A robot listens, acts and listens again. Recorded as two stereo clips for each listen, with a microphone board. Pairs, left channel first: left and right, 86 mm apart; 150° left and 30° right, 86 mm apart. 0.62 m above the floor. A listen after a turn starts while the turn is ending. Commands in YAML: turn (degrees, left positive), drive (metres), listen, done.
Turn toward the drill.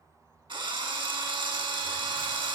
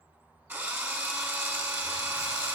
turn: -90
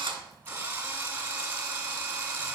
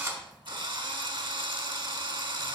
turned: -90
turn: -25
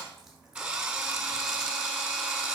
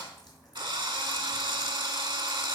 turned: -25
turn: -10
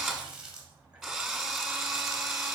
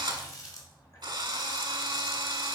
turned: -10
done: "Found it: a drill, straight ahead."